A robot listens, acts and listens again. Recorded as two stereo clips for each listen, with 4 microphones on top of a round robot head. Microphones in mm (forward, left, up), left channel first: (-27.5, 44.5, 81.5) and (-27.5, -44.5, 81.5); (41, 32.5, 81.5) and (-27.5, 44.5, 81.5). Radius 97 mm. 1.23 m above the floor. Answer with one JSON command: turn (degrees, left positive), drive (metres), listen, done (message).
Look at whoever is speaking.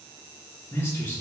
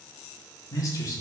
{"turn": 25}
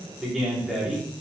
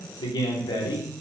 {"done": "Found it: a man speaking, straight ahead."}